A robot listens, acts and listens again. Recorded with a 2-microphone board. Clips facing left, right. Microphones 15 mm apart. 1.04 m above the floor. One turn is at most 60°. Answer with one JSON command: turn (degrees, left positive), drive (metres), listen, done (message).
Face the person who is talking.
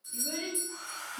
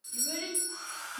{"turn": -30}
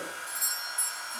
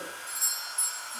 {"listen": true}
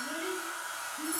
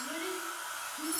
{"turn": -60}
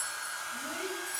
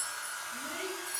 {"turn": -60}
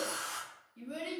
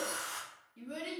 {"turn": -10}
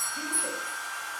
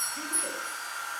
{"listen": true}
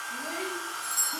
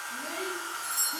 {"listen": true}
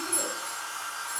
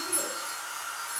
{"done": "Facing where the child speaking came from. I can't hear it now."}